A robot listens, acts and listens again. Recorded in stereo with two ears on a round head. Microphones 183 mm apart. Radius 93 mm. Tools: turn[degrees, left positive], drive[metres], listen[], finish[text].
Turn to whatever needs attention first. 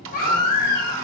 Thought: The baby crying: about 45° left or 135° left.
Action: turn[45]
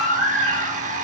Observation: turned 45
Action: finish[Facing the baby crying, 2 to 4 m away.]